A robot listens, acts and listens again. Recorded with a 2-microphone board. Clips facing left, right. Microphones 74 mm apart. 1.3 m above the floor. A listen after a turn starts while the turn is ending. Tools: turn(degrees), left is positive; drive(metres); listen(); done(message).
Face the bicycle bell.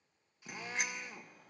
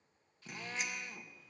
turn(degrees=70)
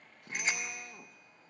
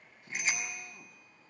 turn(degrees=40)
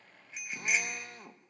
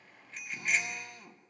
turn(degrees=10)
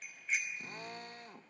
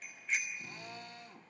done("Facing the bicycle bell, over 4 m away.")